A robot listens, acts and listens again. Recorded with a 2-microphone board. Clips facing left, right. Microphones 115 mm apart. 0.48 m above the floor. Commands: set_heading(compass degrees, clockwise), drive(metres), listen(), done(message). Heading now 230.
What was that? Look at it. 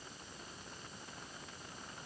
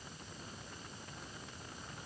listen()
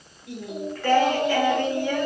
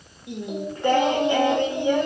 set_heading(250)
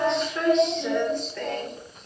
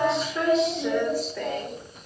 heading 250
done("Found it: singing, straight ahead.")